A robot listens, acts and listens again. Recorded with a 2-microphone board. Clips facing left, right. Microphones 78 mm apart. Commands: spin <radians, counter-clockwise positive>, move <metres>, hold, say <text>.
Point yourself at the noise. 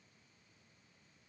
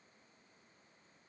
hold
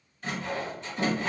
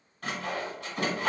spin -1.13
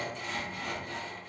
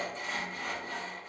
spin -0.52
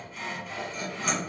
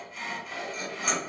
say Facing the sawing, 1 to 2 m away.